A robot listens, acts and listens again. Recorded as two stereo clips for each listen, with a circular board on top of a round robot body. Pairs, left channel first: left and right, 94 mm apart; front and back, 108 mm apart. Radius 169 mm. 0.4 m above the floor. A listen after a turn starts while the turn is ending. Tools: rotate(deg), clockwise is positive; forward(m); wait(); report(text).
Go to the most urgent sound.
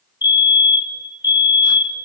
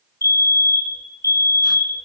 rotate(-60)
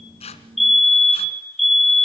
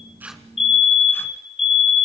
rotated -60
forward(1.0)
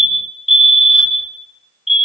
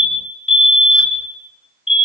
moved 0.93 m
forward(1.0)
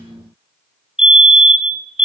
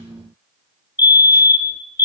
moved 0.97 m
rotate(15)
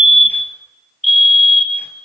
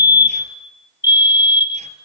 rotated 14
forward(1.0)
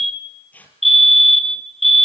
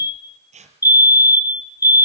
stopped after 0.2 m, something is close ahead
report("Arrived at the fire alarm, straight ahead.")